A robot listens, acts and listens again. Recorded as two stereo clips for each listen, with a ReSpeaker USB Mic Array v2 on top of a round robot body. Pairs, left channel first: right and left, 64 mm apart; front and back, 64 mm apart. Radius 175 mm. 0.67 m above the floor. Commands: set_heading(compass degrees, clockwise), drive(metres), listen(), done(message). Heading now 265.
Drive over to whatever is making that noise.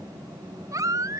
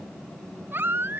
set_heading(140)
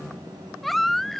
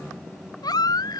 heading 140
drive(1.0)
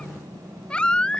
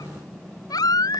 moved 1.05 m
set_heading(155)
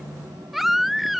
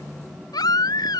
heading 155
drive(1.0)
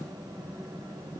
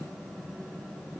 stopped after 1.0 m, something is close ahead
listen()
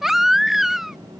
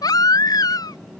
done("Arrived at the baby crying, straight ahead.")